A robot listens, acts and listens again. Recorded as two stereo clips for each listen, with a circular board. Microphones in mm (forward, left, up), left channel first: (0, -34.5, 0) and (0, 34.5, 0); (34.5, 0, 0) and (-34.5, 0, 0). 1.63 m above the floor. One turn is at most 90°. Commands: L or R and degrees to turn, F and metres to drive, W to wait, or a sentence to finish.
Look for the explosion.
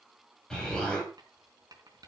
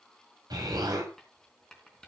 R90
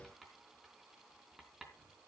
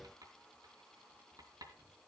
R80
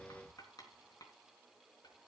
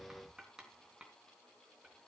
I heard an explosion from this way, but can't make it out now.